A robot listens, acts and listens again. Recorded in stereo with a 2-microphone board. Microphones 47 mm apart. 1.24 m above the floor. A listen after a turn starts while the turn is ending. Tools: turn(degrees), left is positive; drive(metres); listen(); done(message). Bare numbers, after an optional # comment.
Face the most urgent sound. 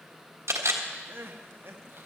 # The crying: about 50° right or 130° right.
turn(-50)
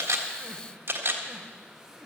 listen()
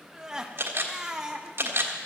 # So it is at 10° right.
turn(-10)
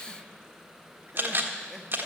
listen()
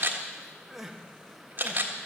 done("Facing the crying, 1 to 2 m away.")